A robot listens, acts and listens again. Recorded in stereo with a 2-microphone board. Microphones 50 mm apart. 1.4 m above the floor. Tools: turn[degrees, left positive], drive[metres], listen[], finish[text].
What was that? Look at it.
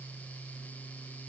Action: listen[]
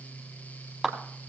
Action: turn[-30]
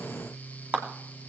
Thought: So it is at 140° right.
Action: turn[-140]
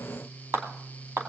Thought: The clap is now 55° right.
Action: turn[-55]
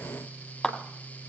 Thought: The clap is now 10° left.
Action: turn[10]
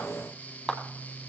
Action: finish[Found it: a clap, straight ahead, 2 to 4 m away.]